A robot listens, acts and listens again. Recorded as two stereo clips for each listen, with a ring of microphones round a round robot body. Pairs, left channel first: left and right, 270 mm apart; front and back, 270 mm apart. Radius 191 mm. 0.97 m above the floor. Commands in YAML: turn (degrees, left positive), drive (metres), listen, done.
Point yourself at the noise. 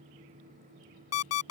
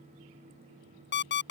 turn: 55
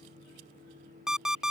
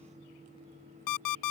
done: "Facing the alarm clock."